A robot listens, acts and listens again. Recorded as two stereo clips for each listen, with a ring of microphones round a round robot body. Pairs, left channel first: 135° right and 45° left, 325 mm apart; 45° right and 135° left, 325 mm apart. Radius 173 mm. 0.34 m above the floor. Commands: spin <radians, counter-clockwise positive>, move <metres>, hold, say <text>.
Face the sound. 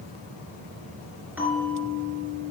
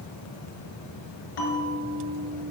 spin -0.70
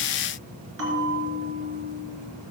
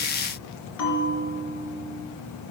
say Found it: a bell, straight ahead.